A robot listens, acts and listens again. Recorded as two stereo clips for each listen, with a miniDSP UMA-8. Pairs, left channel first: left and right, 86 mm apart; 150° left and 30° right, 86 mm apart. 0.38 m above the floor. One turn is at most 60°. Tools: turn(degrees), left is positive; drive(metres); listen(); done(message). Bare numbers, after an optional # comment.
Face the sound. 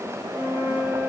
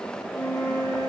# The flute: 170° right.
turn(-60)
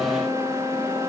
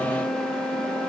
# The flute is now 115° right.
turn(-60)
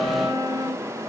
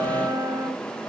# The flute is now 60° right.
turn(-60)
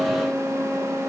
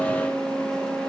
done("Found it: a flute, straight ahead.")